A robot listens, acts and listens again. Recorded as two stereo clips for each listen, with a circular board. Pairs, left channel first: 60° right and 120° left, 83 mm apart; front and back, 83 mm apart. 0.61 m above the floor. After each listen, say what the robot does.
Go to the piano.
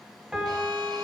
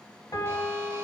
Turn 40° left.
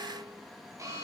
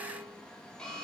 Keep listening.
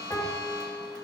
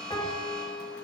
Turn 10° right.
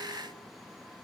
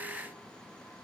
Keep listening.
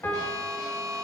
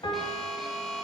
Drive 1.0 m forward.
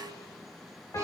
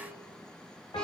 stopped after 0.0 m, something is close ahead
Turn 10° right.
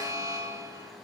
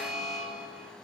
Keep listening.
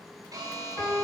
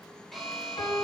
Something is in my way. I am facing the piano but have not reached it.